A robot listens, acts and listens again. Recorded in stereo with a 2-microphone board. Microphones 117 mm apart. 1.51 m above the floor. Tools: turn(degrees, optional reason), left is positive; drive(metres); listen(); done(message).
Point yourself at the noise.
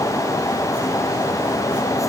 listen()
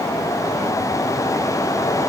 listen()
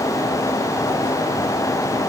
done("I can't make out anything to turn to.")